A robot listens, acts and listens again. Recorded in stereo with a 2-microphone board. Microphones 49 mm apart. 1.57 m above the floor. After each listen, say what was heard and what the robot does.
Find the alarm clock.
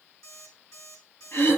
Turn 90° left.
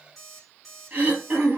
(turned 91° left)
Found it: an alarm clock, straight ahead, over 4 m away.